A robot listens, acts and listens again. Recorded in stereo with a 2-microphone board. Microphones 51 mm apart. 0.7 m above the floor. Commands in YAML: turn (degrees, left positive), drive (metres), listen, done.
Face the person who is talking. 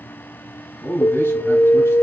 turn: 65
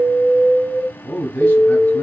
turn: 35
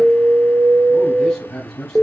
done: "Facing the man speaking, 2 to 4 m away."